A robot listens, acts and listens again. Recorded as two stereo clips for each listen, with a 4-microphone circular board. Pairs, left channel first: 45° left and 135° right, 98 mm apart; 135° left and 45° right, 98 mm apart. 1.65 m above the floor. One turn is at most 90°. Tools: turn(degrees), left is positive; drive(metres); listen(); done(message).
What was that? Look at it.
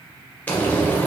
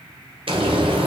turn(degrees=-30)
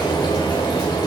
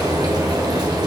done("Found it: frying, straight ahead, under 1 m away.")